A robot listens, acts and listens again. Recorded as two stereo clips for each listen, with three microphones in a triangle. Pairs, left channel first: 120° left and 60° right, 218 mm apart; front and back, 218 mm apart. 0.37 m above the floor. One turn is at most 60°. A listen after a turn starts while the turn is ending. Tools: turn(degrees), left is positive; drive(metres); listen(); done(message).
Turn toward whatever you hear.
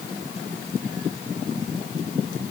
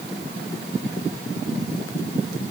listen()
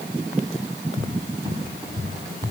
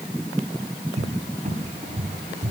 turn(degrees=-60)
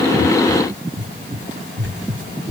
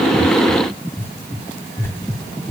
turn(degrees=-60)
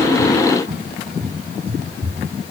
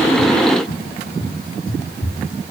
done("Facing the cupboard door, 2 to 4 m away.")